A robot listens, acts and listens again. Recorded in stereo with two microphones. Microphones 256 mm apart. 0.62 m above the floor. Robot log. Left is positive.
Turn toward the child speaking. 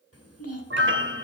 note: The child speaking: about 70° left or 110° left.
cmd yaw +70
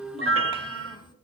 note: So it is at 15° left.
cmd yaw +15
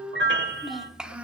end: Facing the child speaking.